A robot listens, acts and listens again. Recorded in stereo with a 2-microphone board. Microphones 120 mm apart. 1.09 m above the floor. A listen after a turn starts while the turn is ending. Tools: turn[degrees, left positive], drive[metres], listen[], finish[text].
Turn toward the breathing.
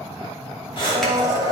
Thought: The breathing: about 45° left or 135° left.
Action: turn[45]
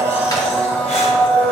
Action: listen[]
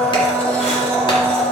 Action: listen[]
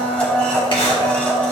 Action: finish[I heard breathing, but can't make it out now. It was about straight ahead or 90° left.]